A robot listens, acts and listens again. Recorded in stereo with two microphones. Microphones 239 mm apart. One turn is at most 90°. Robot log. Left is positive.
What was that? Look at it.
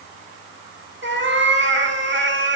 note: The cat meowing: about 50° right or 130° right.
cmd yaw -50
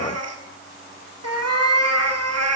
note: So it is at 80° right.
cmd yaw -80
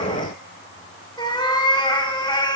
note: The cat meowing is now 15° left.
cmd yaw +15
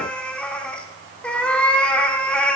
end: Facing the cat meowing.